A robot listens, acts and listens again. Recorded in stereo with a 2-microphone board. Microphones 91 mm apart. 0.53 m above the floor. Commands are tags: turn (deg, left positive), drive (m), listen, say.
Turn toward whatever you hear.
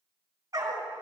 <turn deg="-45"/>
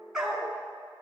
<say>Found it: a dog barking, straight ahead.</say>